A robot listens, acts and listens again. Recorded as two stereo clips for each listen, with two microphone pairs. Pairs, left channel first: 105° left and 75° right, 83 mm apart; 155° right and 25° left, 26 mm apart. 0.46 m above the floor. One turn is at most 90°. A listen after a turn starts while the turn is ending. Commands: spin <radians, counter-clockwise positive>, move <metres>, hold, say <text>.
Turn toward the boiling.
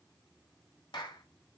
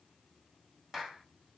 hold
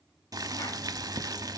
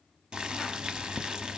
spin -0.52
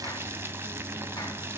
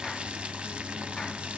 spin -0.17
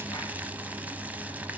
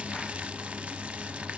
say Facing the boiling.